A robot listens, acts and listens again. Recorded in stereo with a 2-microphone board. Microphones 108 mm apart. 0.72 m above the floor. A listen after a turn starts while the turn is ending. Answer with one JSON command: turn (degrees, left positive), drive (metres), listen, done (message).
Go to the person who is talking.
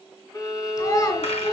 {"turn": 35}
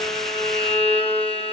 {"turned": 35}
{"listen": true}
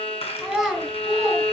{"drive": 1.0}
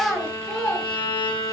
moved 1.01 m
{"drive": 1.0}
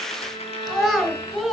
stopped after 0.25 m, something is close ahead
{"done": "Blocked. The child speaking is further on, straight ahead."}